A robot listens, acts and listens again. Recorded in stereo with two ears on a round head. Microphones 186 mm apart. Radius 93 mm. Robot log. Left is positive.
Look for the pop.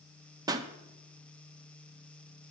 note: The pop: about 20° right or 160° right.
cmd yaw -20
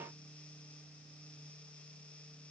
cmd idle
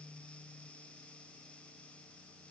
end: I heard a pop, but can't make it out now. It was about straight ahead or 140° right.